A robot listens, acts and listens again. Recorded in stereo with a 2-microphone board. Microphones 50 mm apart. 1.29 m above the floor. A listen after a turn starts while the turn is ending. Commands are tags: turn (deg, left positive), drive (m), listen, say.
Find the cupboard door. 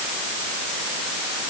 <listen/>
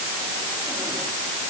<listen/>
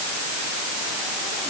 <say>I can't make out a cupboard door to turn to.</say>